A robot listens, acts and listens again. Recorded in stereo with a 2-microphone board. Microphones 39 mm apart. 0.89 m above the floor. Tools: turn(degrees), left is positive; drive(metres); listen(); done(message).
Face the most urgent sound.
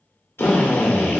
listen()
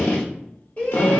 turn(degrees=35)
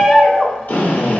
done("Facing the shout.")